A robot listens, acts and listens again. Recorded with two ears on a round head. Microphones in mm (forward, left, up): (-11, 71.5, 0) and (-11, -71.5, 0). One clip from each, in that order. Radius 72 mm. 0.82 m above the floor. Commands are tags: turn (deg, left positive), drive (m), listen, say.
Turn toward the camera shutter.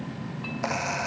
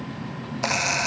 <turn deg="-55"/>
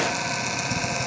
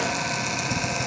<say>Found it: a camera shutter, straight ahead.</say>